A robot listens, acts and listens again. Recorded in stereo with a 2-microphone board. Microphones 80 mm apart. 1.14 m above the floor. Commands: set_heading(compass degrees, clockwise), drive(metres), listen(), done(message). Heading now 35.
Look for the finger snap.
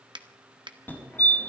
set_heading(105)
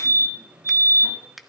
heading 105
done("Found it: a finger snap, straight ahead.")